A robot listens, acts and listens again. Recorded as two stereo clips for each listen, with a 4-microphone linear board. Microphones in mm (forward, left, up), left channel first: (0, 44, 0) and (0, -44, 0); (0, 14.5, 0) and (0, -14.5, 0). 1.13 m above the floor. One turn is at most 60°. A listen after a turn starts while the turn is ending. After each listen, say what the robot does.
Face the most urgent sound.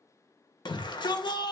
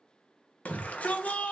Turn 60° left.
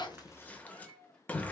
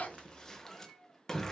Turn 20° left.
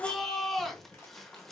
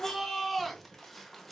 Facing the shout.